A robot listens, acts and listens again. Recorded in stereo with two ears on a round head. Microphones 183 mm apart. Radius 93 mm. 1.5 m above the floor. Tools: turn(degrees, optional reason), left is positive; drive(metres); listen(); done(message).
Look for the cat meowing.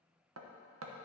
listen()
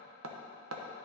listen()
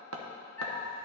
turn(degrees=30)
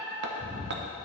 turn(degrees=-45, reason="So it is at 45° right.")
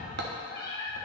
turn(degrees=-30, reason="The cat meowing is now 30° right.")
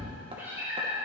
turn(degrees=-10, reason="The cat meowing is now 10° right.")
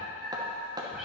done("Found it: a cat meowing, straight ahead.")